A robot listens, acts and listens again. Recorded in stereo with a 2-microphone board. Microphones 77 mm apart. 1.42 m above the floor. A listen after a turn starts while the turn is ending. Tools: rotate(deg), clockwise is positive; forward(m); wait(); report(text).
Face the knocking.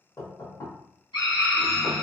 rotate(-50)
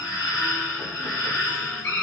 wait()
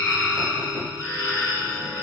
wait()
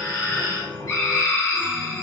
report("I heard knocking, but can't make it out now. It was about straight ahead or 80° left.")